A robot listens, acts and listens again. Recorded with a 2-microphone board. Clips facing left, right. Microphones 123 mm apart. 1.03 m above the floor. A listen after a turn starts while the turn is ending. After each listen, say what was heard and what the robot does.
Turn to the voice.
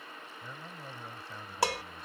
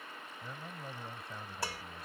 Turn 30° right.
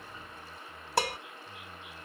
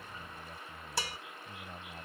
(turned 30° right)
So it is at 145° right. Turn 145° right.
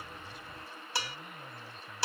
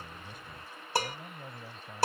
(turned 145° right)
The man speaking is now 35° right. Turn 35° right.
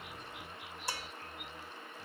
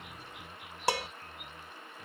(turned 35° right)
Keep listening.
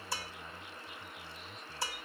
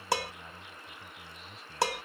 Keep listening.
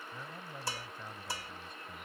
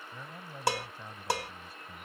Facing the man speaking.